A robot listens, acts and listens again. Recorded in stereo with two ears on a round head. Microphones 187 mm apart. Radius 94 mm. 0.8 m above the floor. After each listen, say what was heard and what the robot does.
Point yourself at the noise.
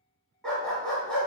Turn 30° left.
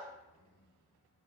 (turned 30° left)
Keep listening.
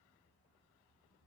Keep listening.
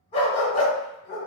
So it is at 145° left. Turn 145° left.
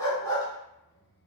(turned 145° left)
The dog barking is now 20° left. Turn 20° left.
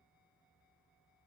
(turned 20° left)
Keep listening.
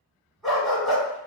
Found it: a dog barking, straight ahead, 1 to 2 m away.